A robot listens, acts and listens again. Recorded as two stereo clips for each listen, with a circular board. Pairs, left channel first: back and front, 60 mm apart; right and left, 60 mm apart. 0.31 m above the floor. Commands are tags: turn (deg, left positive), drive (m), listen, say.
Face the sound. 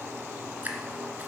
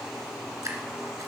<turn deg="60"/>
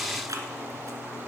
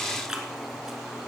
<turn deg="10"/>
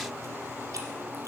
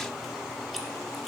<listen/>
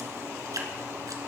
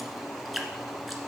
<say>Found it: dripping, straight ahead.</say>